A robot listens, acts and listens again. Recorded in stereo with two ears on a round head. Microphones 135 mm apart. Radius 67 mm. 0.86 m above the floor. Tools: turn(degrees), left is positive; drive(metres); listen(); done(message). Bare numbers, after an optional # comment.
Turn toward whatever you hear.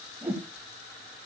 turn(-30)
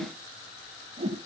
# So it is at 140° right.
turn(-140)
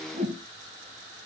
# The whoosh is now 50° right.
turn(-50)
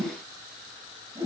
# The whoosh is now 25° right.
turn(-25)
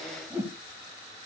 # The whoosh is now 15° right.
turn(-15)
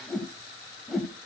done("Found it: a whoosh, straight ahead.")